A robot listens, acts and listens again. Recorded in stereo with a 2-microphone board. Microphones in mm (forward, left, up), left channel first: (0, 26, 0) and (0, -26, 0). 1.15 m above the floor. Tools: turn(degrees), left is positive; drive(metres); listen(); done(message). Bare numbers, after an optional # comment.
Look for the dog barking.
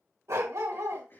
# The dog barking: about 75° right or 105° right.
turn(-75)
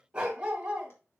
# So it is at 20° right.
turn(-20)
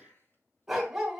done("Found it: a dog barking, straight ahead, 2 to 4 m away.")